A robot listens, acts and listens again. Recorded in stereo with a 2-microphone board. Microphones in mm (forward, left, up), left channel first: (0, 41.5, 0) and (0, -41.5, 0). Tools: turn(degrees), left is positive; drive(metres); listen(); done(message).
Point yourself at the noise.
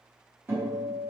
turn(degrees=-30)
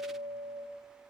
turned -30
turn(degrees=-120)
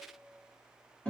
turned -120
turn(degrees=15)
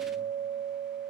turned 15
done("Found it: a guitar, straight ahead, 1 to 2 m away.")